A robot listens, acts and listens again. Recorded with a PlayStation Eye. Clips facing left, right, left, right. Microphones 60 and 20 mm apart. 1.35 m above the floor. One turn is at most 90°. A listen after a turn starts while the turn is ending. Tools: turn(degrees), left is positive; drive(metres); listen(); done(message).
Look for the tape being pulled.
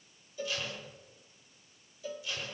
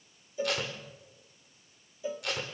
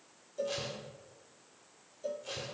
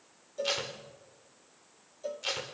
turn(degrees=-90)
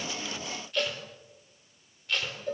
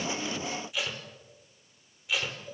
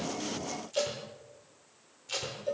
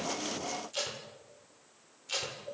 turn(degrees=-10)
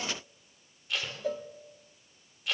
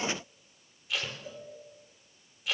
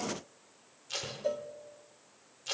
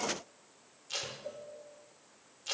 done("Facing the tape being pulled.")